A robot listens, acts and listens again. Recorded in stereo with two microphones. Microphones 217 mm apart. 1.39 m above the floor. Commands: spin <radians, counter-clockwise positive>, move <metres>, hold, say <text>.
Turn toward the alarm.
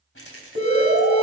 spin -0.96
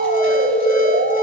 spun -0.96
spin -1.22
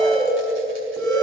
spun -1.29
say Facing the alarm.